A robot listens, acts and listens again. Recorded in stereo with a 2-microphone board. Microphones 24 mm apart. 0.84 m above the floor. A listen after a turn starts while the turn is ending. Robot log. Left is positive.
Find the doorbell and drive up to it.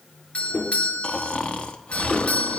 note: The doorbell: about 60° left or 120° left.
cmd yaw +60
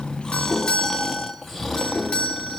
note: So it is at 50° left.
cmd yaw +50
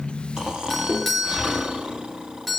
cmd fwd 1.0
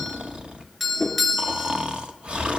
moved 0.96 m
cmd fwd 1.0
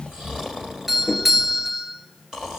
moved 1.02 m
note: The doorbell is now 15° right.
cmd yaw -15
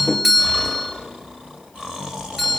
cmd fwd 1.0
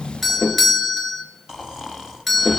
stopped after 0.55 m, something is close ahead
end: I am next to the doorbell.